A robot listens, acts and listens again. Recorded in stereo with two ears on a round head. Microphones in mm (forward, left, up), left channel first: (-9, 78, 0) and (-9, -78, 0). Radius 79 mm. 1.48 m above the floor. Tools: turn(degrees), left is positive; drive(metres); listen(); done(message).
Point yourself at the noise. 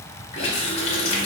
turn(degrees=35)
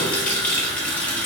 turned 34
turn(degrees=10)
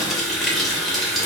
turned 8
done("Found it: a running tap, straight ahead.")